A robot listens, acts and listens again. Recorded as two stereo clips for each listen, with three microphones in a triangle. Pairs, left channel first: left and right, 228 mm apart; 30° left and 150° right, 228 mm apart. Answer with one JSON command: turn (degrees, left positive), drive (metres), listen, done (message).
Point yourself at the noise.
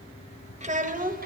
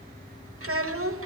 {"turn": -140}
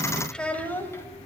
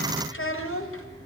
{"turn": 10}
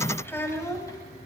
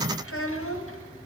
{"turn": 15}
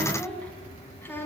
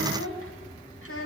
{"turn": 10}
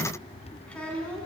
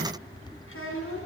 {"done": "Facing the child speaking, 2 to 4 m away."}